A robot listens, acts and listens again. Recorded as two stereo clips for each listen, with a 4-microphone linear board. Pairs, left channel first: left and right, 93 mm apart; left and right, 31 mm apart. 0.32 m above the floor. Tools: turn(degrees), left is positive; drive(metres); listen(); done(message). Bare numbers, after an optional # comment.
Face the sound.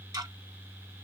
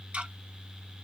# The ticking: about 45° right or 135° right.
turn(-45)
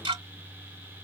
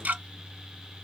# So it is at 90° right.
turn(-90)
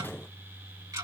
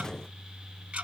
# The ticking is now 45° right.
turn(-45)
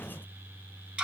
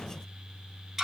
# The ticking is now 10° right.
turn(-10)
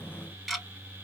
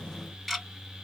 done("Found it: ticking, straight ahead.")